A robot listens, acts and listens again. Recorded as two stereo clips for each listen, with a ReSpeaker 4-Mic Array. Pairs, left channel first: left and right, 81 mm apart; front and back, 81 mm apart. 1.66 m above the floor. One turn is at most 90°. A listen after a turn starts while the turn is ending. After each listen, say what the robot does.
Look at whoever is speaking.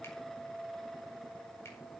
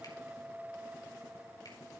Keep listening.
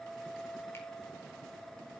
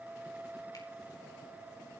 Keep listening.
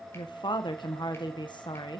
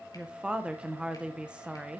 Turn 90° left.
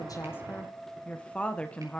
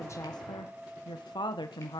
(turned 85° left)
Turn 15° left.
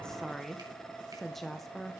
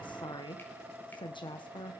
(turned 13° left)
Facing the woman speaking.